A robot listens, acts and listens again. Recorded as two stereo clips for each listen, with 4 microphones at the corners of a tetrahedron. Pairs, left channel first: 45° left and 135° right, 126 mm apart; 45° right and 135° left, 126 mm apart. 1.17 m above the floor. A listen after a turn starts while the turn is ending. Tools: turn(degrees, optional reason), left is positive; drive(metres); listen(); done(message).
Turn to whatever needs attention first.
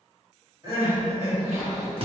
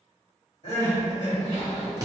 turn(degrees=-70, reason="The crying: 70° right.")
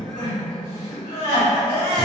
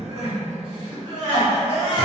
turn(degrees=10, reason="The crying is now 10° left.")
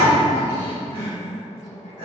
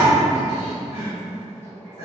done("Found it: crying, straight ahead.")